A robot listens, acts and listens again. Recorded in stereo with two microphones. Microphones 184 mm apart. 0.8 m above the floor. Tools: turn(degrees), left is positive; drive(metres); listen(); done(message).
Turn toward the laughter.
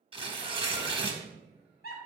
turn(degrees=55)
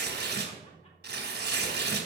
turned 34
listen()
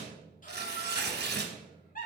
turn(degrees=50)
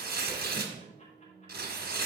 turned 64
listen()
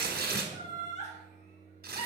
turn(degrees=40)
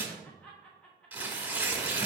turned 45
done("Found it: laughter, straight ahead.")